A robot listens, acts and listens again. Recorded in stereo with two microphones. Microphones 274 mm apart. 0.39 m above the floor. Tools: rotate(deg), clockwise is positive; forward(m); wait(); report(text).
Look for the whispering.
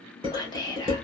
rotate(-30)
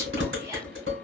wait()
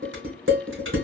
wait()
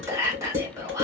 rotate(15)
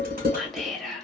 report("Facing the whispering.")